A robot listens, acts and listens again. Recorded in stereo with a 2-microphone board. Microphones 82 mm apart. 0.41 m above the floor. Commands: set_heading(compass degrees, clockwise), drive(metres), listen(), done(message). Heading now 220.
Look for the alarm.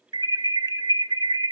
set_heading(280)
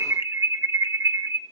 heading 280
set_heading(315)
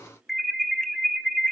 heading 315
done("Found it: an alarm, straight ahead, 1 to 2 m away.")